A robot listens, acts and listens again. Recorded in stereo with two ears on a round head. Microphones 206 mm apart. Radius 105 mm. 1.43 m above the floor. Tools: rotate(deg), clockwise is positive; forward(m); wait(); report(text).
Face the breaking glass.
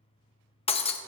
rotate(-25)
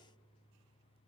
wait()
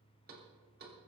report("I heard breaking glass, but can't make it out now. It was about straight ahead or 130° left.")